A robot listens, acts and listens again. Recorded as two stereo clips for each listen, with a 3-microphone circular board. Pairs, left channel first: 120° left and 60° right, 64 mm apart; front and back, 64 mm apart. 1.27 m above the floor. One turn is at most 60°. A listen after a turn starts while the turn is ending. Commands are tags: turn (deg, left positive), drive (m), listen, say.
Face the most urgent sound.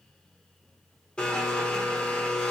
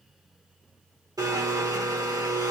<listen/>
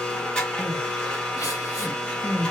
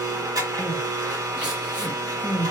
<turn deg="60"/>
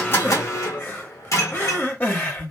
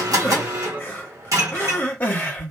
<turn deg="60"/>
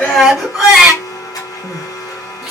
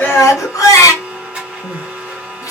<turn deg="25"/>
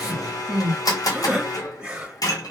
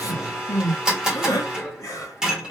<turn deg="15"/>
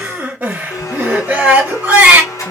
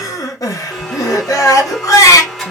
<say>Facing the crying.</say>